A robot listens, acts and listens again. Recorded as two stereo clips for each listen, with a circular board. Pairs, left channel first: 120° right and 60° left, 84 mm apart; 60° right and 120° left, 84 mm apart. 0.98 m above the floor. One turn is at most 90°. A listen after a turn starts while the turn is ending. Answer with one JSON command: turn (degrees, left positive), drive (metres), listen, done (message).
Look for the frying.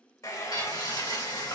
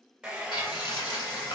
{"turn": -85}
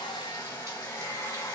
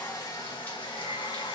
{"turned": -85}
{"listen": true}
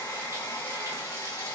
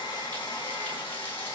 {"listen": true}
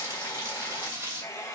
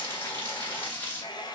{"done": "Found it: frying, straight ahead, 2 to 4 m away."}